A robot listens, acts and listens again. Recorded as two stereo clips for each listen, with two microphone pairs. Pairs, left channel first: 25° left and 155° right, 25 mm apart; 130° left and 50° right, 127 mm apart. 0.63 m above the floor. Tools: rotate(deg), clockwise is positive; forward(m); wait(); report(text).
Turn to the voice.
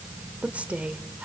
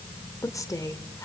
rotate(170)
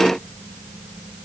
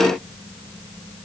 rotate(25)
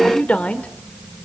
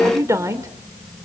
rotate(-15)
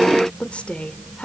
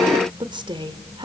report("Found it: a woman speaking, straight ahead, 2 to 4 m away.")